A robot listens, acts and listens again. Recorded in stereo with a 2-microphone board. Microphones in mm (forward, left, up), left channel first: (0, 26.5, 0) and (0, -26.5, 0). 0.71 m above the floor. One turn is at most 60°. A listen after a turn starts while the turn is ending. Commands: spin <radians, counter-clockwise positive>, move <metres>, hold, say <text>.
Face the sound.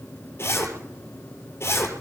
spin 0.87
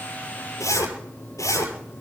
spin 1.05
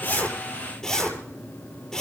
spin 0.26
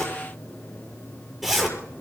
say Facing the zipper.